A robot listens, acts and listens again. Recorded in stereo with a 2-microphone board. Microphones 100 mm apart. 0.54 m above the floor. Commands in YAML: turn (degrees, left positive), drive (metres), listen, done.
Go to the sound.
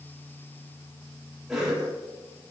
turn: -30
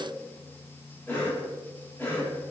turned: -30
turn: 15
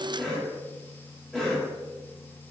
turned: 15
drive: 1.0
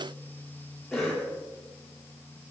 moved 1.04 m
drive: 1.0
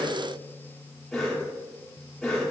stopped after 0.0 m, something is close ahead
done: "Arrived at the cough, straight ahead."